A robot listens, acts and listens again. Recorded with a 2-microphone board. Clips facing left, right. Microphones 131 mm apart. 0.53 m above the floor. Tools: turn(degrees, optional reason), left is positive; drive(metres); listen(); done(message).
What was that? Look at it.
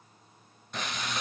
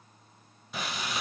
turn(degrees=-30)
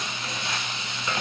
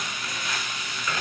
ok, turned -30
turn(degrees=25, reason="So it is at 25° left.")
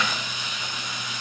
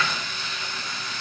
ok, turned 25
turn(degrees=15, reason="The frying is now 15° left.")
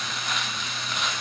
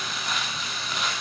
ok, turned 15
done("Facing the frying.")